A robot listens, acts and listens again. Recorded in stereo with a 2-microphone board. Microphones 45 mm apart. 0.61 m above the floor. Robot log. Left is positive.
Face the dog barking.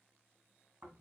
cmd idle
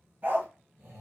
note: The dog barking: about 55° right or 125° right.
cmd yaw -55
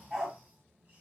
note: So it is at 10° right.
cmd yaw -10
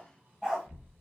end: Facing the dog barking, 2 to 4 m away.